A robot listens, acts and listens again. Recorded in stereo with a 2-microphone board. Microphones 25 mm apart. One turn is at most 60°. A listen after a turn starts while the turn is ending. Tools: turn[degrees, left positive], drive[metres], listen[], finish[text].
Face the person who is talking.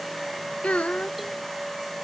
Thought: The child speaking: about 65° left or 115° left.
Action: turn[60]
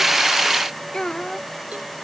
Thought: So it is at 25° left.
Action: turn[25]
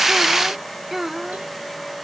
Thought: The child speaking is now 15° right.
Action: turn[-15]
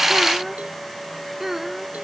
Thought: The child speaking is now 15° right.
Action: turn[-15]
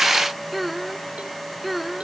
Action: finish[Facing the child speaking.]